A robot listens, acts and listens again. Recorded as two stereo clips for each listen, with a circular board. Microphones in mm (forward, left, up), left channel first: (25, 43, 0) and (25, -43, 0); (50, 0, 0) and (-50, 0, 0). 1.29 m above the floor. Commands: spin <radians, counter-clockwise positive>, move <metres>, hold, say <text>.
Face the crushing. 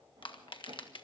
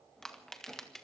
spin 1.48
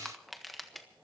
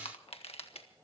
say Facing the crushing.